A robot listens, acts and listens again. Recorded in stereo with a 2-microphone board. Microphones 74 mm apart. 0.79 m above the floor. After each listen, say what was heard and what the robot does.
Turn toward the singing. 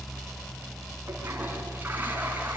Keep listening.
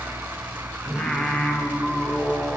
The singing: about 15° left or 165° left. Turn 15° left.
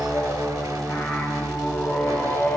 The singing: about 40° left or 140° left. Turn 40° left.
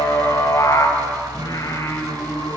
So it is at 110° left. Turn 110° left.
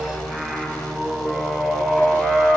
The singing is now 15° right. Turn 15° right.
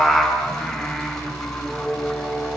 Found it: singing, straight ahead, over 4 m away.